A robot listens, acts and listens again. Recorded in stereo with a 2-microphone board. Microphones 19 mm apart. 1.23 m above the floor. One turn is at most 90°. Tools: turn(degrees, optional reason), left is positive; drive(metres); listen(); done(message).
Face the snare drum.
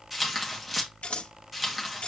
listen()
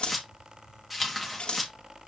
listen()
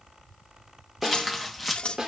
turn(degrees=-35, reason="The snare drum: about 35° right or 145° right.")
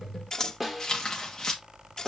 done("Facing the snare drum.")